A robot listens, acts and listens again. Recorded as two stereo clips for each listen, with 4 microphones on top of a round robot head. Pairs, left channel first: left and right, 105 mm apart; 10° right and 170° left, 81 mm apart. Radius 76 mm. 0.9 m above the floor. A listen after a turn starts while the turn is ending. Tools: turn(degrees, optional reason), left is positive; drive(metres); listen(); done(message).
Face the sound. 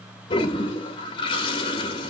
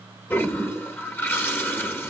turn(degrees=50, reason="The toilet flushing: 50° left.")
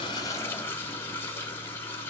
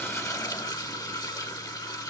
turn(degrees=20, reason="The toilet flushing is now 20° left.")
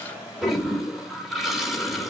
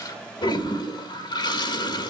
done("Facing the toilet flushing, 1 to 2 m away.")